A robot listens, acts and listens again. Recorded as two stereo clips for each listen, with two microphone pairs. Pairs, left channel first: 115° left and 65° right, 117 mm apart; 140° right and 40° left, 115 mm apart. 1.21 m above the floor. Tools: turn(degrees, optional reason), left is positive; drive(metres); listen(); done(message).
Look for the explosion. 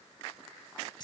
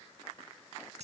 listen()
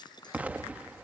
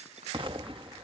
turn(degrees=10, reason="The explosion: 10° left.")
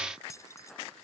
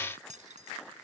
done("I heard an explosion from this way, but can't make it out now.")